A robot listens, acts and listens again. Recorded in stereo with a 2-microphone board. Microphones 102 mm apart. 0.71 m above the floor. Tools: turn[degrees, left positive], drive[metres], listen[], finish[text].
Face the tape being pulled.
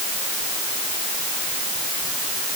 Action: listen[]
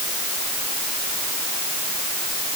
Action: listen[]
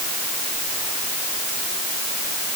Action: finish[I can't make out tape being pulled to turn to.]